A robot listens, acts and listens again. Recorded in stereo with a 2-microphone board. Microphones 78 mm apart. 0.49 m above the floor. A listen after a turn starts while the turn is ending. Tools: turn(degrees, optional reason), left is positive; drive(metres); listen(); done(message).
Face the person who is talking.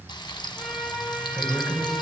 turn(degrees=30)
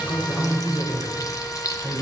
turn(degrees=-40, reason="So it is at 40° right.")
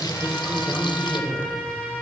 turn(degrees=-20, reason="The woman speaking is now 20° right.")
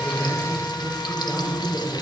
turn(degrees=-10, reason="The woman speaking is now 10° right.")
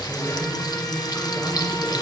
done("Facing the woman speaking.")